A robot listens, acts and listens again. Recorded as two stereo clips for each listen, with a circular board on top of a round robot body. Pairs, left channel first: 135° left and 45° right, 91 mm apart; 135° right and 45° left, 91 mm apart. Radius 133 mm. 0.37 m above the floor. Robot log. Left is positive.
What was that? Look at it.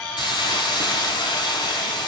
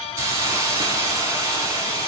note: The hiss: 100° left.
cmd yaw +100
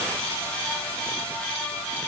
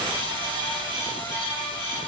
cmd idle
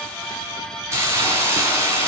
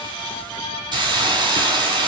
note: The hiss is now 15° left.
cmd yaw +15
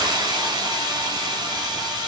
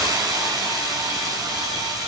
end: Facing the hiss.